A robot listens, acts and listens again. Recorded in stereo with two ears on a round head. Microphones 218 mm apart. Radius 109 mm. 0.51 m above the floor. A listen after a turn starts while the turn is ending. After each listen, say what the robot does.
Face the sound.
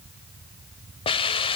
Turn 20° left.
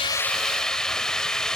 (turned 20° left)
Facing the hiss.